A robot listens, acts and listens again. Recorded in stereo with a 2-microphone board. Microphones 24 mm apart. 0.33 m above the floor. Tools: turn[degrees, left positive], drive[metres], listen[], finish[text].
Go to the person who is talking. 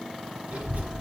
Thought: The child speaking: about 60° right or 120° right.
Action: turn[-60]
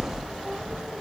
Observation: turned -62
Thought: So it is at 55° right.
Action: turn[-55]
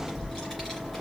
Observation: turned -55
Action: drive[1.0]
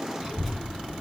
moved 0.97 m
Thought: The child speaking is now 10° right.
Action: turn[-10]
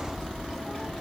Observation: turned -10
Action: drive[1.0]
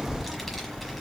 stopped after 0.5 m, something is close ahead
Action: finish[Arrived at the child speaking, straight ahead.]